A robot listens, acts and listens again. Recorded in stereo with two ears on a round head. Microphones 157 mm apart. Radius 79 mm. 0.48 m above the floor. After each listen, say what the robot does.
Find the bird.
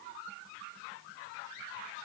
Keep listening.
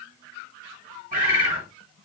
Turn 45° right.
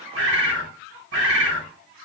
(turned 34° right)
Turn 95° right.
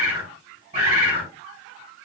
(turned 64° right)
Turn 30° right.
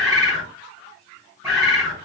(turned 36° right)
Found it: a bird, straight ahead.